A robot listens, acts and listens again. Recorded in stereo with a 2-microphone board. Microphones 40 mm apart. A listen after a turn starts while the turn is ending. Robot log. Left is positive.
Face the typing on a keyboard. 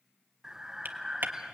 note: The typing on a keyboard: about 50° right or 130° right.
cmd yaw -50
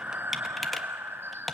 end: Facing the typing on a keyboard, 1 to 2 m away.